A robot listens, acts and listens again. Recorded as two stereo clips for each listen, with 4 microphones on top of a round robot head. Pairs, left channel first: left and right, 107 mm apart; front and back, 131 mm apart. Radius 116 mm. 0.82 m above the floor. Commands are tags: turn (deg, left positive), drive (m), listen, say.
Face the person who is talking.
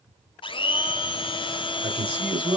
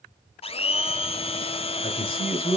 <turn deg="-55"/>
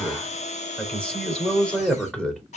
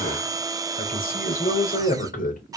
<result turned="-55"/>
<turn deg="10"/>
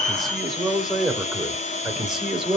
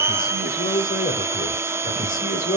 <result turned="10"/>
<say>Found it: a man speaking, straight ahead, 2 to 4 m away.</say>